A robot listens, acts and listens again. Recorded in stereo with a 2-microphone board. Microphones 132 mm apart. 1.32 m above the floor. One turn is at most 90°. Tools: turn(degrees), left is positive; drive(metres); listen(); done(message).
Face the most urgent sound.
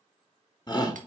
turn(degrees=30)
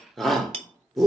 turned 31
done("Facing the shout, 1 to 2 m away.")